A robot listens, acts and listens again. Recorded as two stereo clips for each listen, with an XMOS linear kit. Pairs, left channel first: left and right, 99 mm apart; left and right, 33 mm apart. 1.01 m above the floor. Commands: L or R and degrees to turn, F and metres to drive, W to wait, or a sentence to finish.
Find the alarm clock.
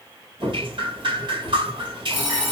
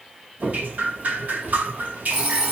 R20
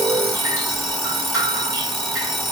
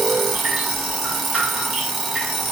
Found it: an alarm clock, straight ahead.